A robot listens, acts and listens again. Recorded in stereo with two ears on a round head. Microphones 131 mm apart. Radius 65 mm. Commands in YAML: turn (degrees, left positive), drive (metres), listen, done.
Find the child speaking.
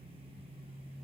listen: true
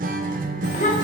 turn: 50
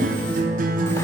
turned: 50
listen: true
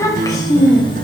turn: 30
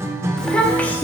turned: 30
turn: 15
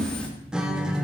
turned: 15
turn: 10
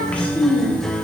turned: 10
turn: 10
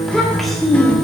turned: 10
done: "Facing the child speaking, 1 to 2 m away."